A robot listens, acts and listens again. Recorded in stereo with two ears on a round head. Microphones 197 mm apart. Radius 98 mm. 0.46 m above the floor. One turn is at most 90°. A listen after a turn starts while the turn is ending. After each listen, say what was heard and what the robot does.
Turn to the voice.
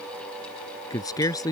The man speaking: about 15° left or 165° left. Turn 15° left.
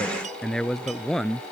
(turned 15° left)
Turn 30° left.
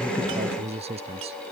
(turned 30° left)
So it is at 30° right. Turn 30° right.
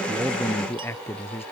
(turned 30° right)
The man speaking is now 10° left. Turn 10° left.
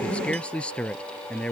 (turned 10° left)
Facing the man speaking.